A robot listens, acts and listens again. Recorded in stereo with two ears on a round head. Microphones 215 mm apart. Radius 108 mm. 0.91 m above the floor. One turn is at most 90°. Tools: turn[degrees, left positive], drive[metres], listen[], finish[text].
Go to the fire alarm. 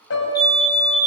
Thought: The fire alarm: about 15° left or 165° left.
Action: turn[15]
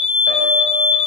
Thought: So it is at 155° left.
Action: turn[90]
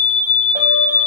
Thought: The fire alarm is now 80° left.
Action: turn[80]
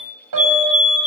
Thought: The fire alarm is now 25° left.
Action: turn[25]
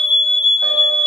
Action: drive[1.0]
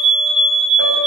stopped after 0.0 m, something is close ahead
Action: finish[Blocked. The fire alarm is further on, straight ahead.]